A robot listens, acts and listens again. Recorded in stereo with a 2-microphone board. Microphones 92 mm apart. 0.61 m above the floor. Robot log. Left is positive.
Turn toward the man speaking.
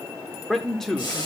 cmd yaw +30
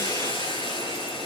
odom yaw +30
cmd idle
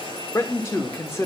note: So it is at 145° left.
cmd yaw +145
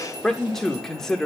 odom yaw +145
end: Facing the man speaking.